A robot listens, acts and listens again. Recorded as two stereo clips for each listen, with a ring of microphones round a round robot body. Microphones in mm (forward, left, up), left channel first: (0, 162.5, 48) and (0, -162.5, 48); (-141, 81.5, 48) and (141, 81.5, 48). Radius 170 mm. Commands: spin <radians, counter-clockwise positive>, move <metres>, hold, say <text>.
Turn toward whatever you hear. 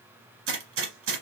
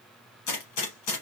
spin -2.44
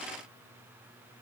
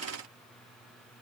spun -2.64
spin 0.17
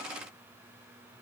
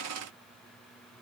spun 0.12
say I heard a gunshot from this way, but can't make it out now.